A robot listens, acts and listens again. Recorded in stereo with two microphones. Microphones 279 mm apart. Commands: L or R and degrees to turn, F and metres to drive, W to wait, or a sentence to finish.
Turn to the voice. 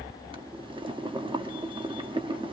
W
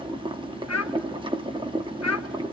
L70
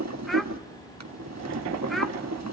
W
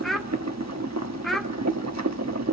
Facing the child speaking, under 1 m away.